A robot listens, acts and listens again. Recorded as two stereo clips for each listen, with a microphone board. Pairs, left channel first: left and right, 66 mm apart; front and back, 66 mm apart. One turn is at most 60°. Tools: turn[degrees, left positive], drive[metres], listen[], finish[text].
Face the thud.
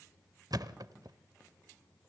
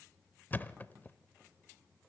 Thought: The thud: 65° right.
Action: turn[-60]
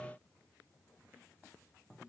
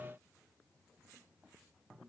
Action: finish[Facing where the thud came from. I can't hear it now.]